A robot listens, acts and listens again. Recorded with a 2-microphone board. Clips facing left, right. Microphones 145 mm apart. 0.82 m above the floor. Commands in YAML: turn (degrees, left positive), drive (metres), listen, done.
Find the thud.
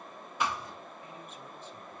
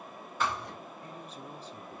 turn: 30
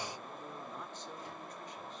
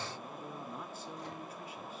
listen: true
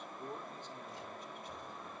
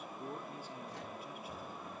done: "I heard a thud, but can't make it out now. It was about 15° right or 135° left."